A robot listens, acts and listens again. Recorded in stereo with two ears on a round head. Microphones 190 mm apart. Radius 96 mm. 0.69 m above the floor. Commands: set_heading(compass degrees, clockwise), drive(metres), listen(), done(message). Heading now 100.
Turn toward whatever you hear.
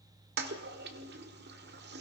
set_heading(150)
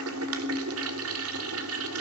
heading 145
set_heading(225)
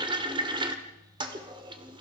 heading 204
set_heading(224)
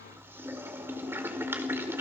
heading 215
set_heading(225)
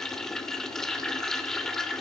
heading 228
done("Facing the toilet flushing, 2 to 4 m away.")